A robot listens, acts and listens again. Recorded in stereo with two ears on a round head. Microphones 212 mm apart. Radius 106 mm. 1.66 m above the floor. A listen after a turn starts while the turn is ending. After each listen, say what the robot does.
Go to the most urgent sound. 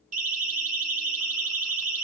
Turn 35° right.
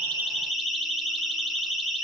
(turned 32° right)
Drive 1.0 m forward.
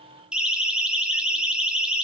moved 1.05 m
Drive 1.0 m forward.
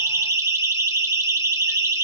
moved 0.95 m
Turn 10° right.
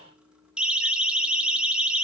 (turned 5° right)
Drive 1.0 m forward.
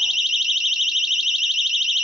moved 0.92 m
Drive 1.0 m forward.
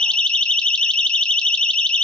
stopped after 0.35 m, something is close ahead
Arrived at the siren, straight ahead.